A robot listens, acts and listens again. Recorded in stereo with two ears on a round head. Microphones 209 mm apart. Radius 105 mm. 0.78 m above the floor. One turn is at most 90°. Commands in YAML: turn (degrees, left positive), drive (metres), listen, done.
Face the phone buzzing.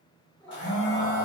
turn: 55
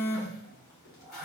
turn: 70
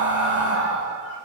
listen: true
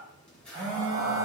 done: "Facing the phone buzzing, 1 to 2 m away."